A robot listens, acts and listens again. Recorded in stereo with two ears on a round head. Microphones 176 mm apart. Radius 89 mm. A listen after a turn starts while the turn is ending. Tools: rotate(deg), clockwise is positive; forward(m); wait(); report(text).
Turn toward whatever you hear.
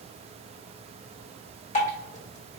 rotate(-35)
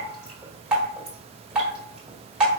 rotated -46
report("Facing the dripping.")